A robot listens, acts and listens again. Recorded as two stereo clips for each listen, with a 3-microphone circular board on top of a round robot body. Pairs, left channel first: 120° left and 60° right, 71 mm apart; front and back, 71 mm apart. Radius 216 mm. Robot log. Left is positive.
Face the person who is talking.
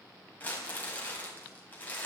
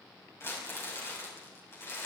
cmd idle
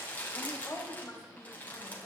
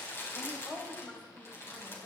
note: The woman speaking: 60° left.
cmd yaw +60
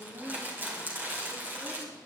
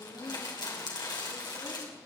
end: Facing the woman speaking.